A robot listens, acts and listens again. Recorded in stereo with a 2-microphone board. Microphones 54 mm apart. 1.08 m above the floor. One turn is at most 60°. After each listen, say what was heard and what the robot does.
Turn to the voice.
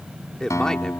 Turn 30° left.
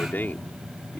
So it is at 140° left. Turn 60° left.
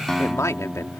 The man speaking is now 80° left. Turn 60° left.
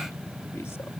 Nothing new. It was at 20° left. Turn 20° left.
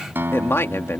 The man speaking is now 55° left. Turn 55° left.
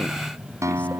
Keep listening.
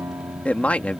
The man speaking is now 25° left. Turn 25° left.
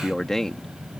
The man speaking is now 10° left. Turn 10° left.
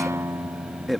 Facing the man speaking.